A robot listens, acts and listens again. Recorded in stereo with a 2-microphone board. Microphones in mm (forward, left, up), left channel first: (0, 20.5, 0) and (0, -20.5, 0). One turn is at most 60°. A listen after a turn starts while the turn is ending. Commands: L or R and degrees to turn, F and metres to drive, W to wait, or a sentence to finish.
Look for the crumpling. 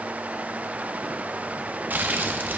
R50
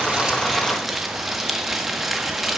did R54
Found it: crumpling, straight ahead.